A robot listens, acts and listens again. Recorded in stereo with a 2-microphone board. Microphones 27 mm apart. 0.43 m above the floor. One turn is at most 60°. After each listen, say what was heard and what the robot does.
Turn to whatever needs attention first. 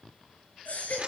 The baby crying: about 60° left or 120° left. Turn 60° left.
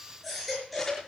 Found it: a baby crying, straight ahead, over 4 m away.